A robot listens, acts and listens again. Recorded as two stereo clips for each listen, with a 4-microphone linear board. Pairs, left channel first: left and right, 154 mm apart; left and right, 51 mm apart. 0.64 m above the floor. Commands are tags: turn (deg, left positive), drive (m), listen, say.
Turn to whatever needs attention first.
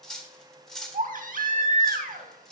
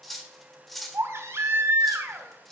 <turn deg="-60"/>
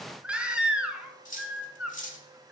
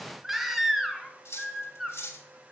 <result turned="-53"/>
<say>Facing the baby crying, 1 to 2 m away.</say>